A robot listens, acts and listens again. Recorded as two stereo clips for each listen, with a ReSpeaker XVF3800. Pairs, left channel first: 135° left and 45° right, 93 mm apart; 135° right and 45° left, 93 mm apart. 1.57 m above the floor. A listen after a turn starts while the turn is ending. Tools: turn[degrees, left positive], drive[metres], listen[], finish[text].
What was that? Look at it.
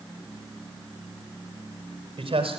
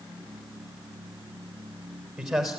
Thought: The man speaking: 40° right.
Action: turn[-40]
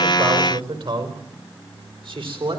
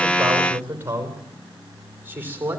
Thought: The man speaking is now 25° right.
Action: turn[-25]
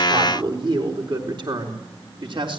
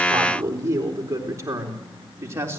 Thought: The man speaking is now 15° right.
Action: turn[-15]
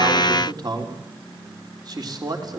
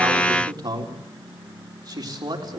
Action: finish[Found it: a man speaking, straight ahead.]